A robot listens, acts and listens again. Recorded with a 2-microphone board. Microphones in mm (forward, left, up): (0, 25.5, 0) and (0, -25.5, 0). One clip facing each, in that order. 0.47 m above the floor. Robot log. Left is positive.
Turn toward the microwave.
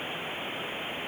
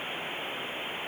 cmd idle
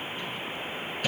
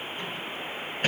note: The microwave: about 40° right or 140° right.
cmd yaw -40
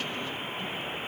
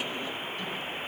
cmd idle
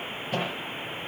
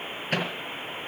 note: So it is at 100° right.
cmd yaw -100
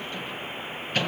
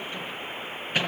note: The microwave is now 15° right.
cmd yaw -15
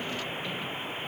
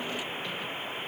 cmd idle
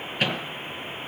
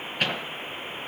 end: Facing the microwave.